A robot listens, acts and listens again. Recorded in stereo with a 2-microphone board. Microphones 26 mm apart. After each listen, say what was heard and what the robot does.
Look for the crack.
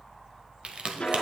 The crack: about 50° right or 130° right. Turn 50° right.
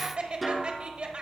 Keep listening.
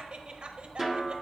I heard a crack, but can't make it out now. It was about straight ahead or 80° right.